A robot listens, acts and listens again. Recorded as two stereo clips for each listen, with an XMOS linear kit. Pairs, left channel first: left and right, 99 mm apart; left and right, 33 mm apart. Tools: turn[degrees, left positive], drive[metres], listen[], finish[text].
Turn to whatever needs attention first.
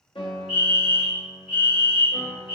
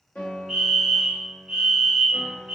Action: turn[-30]
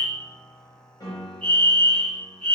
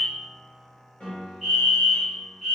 Thought: So it is at 15° left.
Action: turn[15]
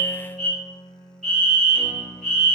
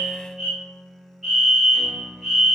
Action: finish[Facing the fire alarm.]